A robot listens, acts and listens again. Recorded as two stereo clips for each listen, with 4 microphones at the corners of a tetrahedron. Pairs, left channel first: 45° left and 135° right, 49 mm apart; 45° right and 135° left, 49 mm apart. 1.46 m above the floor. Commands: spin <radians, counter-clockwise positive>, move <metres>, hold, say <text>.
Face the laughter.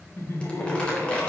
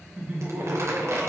spin 1.48
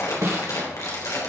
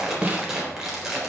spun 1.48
hold
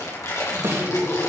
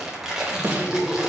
spin 0.70
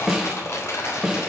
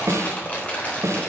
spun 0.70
hold
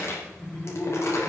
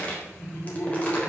say Facing the laughter, over 4 m away.